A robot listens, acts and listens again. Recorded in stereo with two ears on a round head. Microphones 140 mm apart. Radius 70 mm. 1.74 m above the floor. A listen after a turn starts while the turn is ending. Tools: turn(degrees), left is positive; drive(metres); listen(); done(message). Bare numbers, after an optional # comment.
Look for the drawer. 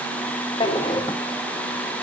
# The drawer: about 30° left or 150° left.
turn(30)
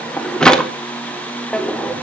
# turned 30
done("Found it: a drawer, straight ahead, 1 to 2 m away.")